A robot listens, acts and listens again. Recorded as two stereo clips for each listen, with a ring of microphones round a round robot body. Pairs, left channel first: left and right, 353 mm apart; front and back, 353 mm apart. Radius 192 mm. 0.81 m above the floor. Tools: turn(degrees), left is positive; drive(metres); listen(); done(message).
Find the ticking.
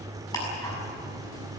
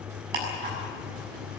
turn(degrees=170)
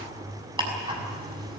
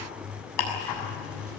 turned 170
turn(degrees=-15)
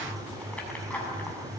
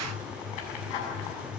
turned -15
done("Facing the ticking.")